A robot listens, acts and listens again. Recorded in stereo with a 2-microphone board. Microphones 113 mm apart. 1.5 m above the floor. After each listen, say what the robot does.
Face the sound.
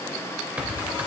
Turn 30° right.
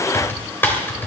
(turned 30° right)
Turn 20° left.
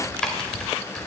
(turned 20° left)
Found it: typing on a keyboard, straight ahead, 2 to 4 m away.